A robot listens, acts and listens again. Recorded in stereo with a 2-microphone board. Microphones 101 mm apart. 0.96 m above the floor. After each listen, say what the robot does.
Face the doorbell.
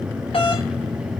Turn 65° left.
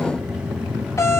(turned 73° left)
Turn 30° left.
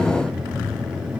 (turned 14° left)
Turn 15° left.
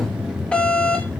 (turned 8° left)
Turn 10° left.
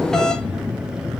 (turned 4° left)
Facing the doorbell, 1 to 2 m away.